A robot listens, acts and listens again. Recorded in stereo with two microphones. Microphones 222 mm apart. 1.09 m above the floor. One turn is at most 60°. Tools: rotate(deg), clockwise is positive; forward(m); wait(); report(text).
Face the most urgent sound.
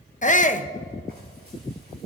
rotate(-35)
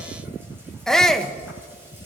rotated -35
report("Found it: a shout, straight ahead.")